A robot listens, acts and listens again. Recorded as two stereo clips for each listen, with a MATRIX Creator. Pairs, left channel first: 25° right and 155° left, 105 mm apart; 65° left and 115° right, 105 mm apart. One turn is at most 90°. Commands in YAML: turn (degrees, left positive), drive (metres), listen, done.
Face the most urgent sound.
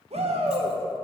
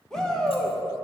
turn: 90
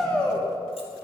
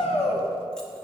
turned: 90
turn: 60
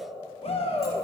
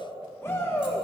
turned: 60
done: "Facing the shout."